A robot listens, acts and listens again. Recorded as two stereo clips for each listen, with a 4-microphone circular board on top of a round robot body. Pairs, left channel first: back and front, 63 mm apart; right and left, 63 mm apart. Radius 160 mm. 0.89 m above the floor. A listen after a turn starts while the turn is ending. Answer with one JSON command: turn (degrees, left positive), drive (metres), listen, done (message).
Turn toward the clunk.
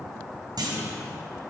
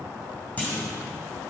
{"turn": -20}
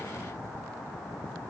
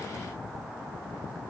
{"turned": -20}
{"done": "Facing where the clunk came from. I can't hear it now."}